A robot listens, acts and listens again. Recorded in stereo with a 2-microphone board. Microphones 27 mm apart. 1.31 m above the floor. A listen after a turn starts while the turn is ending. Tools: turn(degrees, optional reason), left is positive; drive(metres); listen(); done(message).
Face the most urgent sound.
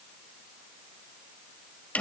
listen()
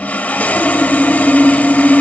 listen()
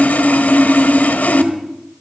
done("I can't make out anything urgent to turn to.")